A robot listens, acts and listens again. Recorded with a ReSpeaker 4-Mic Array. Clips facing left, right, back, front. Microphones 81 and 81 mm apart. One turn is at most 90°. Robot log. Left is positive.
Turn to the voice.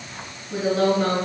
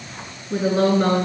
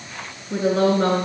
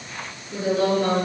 note: The woman speaking: 145° right.
cmd yaw -90
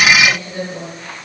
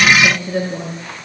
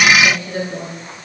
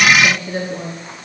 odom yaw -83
note: The woman speaking is now 60° right.
cmd yaw -60
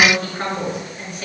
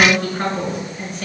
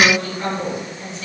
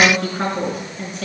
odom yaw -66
end: Facing the woman speaking.